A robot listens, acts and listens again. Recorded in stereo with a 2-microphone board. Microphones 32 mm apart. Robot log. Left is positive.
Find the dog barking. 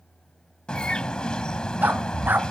cmd yaw -90
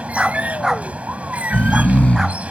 note: So it is at 15° right.
cmd yaw -15
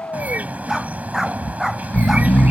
end: Facing the dog barking.